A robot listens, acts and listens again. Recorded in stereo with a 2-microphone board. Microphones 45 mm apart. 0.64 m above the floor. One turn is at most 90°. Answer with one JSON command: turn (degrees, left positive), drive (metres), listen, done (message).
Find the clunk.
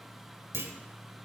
{"turn": -55}
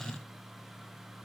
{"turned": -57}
{"listen": true}
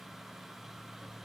{"done": "I heard a clunk, but can't make it out now. It was about straight ahead or 65° right."}